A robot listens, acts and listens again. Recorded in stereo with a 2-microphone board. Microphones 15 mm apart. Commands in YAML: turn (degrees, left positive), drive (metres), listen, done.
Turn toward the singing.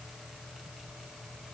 listen: true
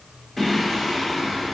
turn: 30
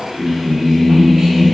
turn: -35
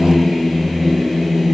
turn: -10
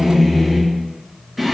done: "Facing the singing, 2 to 4 m away."